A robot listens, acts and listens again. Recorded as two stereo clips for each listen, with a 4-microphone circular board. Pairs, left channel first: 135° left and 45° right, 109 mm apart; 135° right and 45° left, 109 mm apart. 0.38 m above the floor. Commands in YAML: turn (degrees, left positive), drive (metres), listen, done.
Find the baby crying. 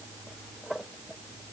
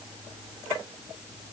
listen: true
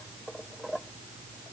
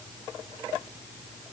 listen: true
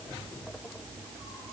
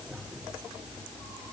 done: "I can't make out a baby crying."